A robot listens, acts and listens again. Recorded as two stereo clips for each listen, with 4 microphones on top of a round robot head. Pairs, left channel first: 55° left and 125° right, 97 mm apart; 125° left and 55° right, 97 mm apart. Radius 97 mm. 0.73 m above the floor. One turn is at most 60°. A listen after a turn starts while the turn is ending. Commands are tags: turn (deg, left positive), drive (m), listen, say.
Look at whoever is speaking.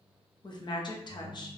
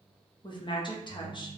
<turn deg="60"/>
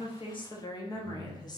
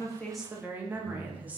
<turn deg="15"/>
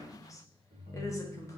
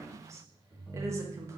<say>Facing the woman speaking, 1 to 2 m away.</say>